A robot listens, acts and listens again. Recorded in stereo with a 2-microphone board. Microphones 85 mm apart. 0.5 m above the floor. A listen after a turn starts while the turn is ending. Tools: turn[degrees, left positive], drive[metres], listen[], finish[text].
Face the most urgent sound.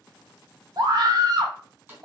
Thought: The scream: about 55° right or 125° right.
Action: turn[-55]
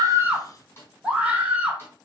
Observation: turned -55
Thought: So it is at 20° right.
Action: turn[-20]
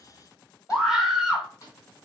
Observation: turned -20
Thought: The scream is now 10° right.
Action: turn[-10]
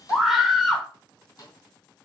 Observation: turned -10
Action: finish[Found it: a scream, straight ahead, 1 to 2 m away.]